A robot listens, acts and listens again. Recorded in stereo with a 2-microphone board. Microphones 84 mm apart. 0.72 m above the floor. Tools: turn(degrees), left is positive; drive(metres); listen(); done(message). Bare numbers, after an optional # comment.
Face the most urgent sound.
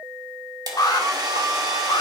# The alarm: about 50° left or 130° left.
turn(50)
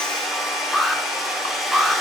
done("Facing the alarm.")